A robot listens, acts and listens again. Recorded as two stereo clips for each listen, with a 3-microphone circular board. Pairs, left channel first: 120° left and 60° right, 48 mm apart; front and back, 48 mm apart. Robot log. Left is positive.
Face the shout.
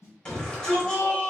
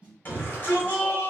note: The shout: 45° left.
cmd yaw +45
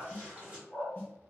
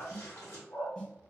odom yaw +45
cmd idle
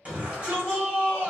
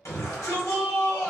end: Facing the shout, 1 to 2 m away.